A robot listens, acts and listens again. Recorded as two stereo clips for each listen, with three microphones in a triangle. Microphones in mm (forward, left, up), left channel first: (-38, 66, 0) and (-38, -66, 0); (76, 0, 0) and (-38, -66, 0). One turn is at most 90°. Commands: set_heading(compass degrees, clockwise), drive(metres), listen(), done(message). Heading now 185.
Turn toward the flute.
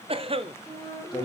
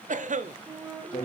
set_heading(95)
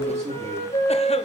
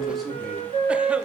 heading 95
set_heading(30)
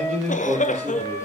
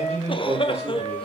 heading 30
set_heading(20)
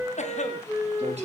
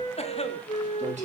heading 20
done("Found it: a flute, straight ahead.")